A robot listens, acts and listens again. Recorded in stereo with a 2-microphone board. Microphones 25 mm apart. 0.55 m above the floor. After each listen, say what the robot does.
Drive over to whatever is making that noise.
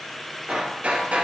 Turn 90° right.
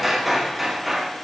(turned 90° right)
Turn 10° right.
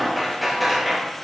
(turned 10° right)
Drive 1.0 m forward.
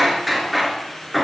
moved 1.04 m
Drive 1.0 m forward.
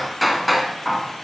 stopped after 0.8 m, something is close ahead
I am next to the hammering.